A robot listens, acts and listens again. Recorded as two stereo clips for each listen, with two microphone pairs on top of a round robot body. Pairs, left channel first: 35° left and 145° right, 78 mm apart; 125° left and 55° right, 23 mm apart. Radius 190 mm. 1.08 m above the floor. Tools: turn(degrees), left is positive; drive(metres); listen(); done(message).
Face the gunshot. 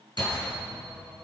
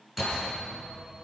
turn(degrees=70)
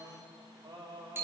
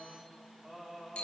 done("I heard a gunshot from this way, but can't make it out now.")